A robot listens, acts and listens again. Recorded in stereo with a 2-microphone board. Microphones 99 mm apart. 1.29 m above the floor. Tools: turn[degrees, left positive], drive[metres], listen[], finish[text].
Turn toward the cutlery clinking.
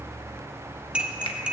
Action: turn[-30]
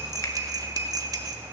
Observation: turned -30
Thought: So it is at 140° right.
Action: turn[-140]
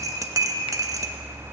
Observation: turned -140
Thought: The cutlery clinking is now 35° right.
Action: turn[-35]
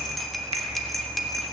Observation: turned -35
Action: finish[Facing the cutlery clinking.]